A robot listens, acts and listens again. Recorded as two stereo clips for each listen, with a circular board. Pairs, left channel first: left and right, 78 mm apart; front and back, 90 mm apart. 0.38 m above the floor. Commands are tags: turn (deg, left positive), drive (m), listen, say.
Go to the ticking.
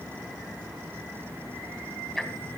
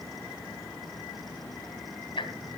<drive m="1.0"/>
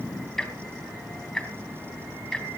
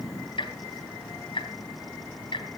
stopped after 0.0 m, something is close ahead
<say>Blocked. The ticking is further on, straight ahead.</say>